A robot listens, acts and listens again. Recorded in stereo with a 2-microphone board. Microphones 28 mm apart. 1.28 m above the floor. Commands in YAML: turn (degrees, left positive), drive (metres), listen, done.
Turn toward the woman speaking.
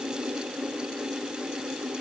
listen: true
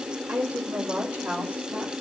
turn: -90
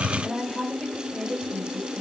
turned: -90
turn: 10
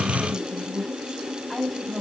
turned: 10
done: "Facing the woman speaking."